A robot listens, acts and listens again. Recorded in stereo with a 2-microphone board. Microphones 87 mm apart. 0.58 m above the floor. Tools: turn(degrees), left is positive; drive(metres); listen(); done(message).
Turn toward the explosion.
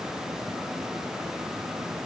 listen()
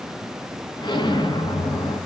turn(degrees=55)
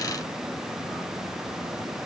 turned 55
listen()
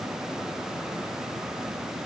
done("I heard an explosion, but can't make it out now. It was about straight ahead or 70° left.")